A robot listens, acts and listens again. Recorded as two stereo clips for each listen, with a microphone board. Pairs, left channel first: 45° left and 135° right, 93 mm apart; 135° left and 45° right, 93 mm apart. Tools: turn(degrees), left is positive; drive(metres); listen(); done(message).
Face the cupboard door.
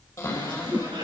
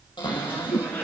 turn(degrees=105)
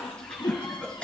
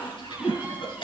listen()
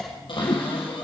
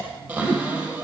turn(degrees=30)
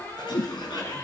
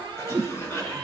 turn(degrees=-15)
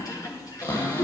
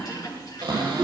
done("Facing the cupboard door.")